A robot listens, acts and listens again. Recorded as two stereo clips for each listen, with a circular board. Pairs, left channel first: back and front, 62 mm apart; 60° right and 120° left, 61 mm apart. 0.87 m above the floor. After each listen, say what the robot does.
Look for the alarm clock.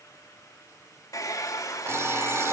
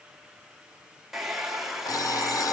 Turn 50° right.
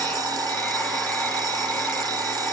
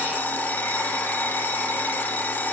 Found it: an alarm clock, straight ahead.